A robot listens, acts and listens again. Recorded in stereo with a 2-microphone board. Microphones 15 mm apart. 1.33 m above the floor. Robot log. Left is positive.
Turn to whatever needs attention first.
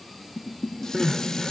cmd yaw -30
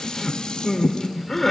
note: So it is at 25° left.
cmd yaw +25
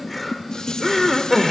note: The crying is now 10° left.
cmd yaw +10
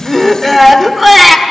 end: Facing the crying.